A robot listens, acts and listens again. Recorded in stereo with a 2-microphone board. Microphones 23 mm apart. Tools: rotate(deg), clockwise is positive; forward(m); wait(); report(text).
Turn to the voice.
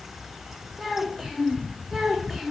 rotate(30)
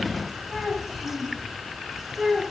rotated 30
rotate(-30)
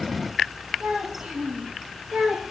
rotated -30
rotate(50)
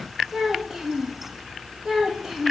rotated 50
rotate(10)
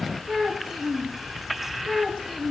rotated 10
report("Found it: a child speaking, straight ahead.")